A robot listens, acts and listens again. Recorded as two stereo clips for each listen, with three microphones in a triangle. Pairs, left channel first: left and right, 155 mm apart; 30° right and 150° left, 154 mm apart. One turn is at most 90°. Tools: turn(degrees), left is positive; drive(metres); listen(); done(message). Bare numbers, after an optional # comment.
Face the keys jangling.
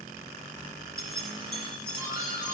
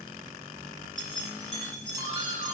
# The keys jangling: 105° left.
turn(90)
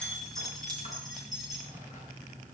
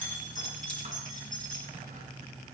done("Facing the keys jangling, over 4 m away.")